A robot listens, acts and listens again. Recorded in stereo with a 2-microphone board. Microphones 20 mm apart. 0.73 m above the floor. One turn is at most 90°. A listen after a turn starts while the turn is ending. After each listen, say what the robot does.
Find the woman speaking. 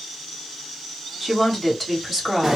Turn 30° left.
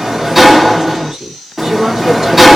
Turn 35° right.
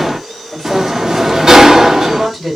Found it: a woman speaking, straight ahead.